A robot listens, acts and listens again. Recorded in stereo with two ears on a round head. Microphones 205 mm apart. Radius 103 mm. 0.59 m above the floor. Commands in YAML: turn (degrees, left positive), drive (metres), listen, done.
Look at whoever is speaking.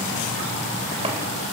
listen: true
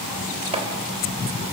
listen: true
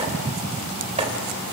done: "I can't make out anyone speaking to turn to."